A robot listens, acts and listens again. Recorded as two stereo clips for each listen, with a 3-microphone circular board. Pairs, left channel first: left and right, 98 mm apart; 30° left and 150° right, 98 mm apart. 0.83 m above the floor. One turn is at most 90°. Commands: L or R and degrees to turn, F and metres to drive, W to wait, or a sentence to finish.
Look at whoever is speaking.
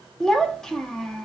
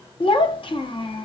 Found it: a child speaking, straight ahead, 1 to 2 m away.